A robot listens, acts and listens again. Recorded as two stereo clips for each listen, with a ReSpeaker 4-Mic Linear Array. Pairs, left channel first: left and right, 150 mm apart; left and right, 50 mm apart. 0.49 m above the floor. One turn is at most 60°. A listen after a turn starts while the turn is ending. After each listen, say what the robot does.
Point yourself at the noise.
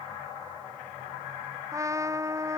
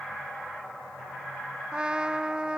Turn 20° right.
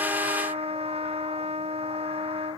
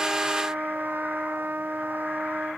Turn 60° right.
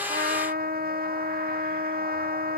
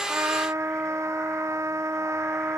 Turn 60° right.
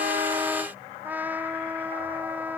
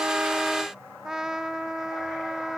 Turn 10° right.
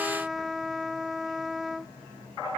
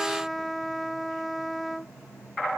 Facing the trumpet.